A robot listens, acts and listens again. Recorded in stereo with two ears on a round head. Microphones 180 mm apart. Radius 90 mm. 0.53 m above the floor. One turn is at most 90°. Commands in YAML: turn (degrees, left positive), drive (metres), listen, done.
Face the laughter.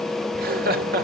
turn: -50
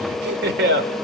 turn: -70
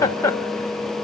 turn: 15
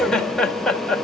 done: "Found it: laughter, straight ahead."